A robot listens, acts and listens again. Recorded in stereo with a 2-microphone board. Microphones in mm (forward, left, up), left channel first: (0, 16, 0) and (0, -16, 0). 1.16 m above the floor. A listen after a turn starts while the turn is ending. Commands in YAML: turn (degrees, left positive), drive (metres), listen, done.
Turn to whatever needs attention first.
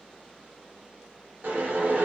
listen: true
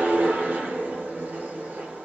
listen: true
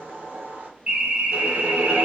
turn: -45
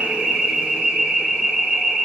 done: "Facing the alarm, 1 to 2 m away."